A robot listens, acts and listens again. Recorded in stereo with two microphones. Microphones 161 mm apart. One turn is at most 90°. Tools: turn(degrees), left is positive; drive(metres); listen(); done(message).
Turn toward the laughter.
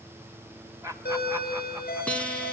turn(degrees=-20)
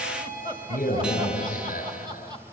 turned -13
turn(degrees=-25)
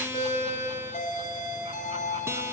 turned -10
listen()
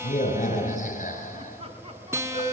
turn(degrees=-35)
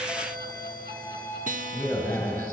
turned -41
listen()
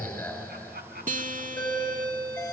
turn(degrees=-90)
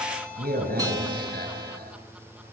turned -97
listen()
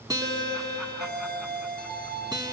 listen()
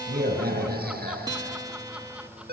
done("Facing where the laughter came from. I can't hear it now.")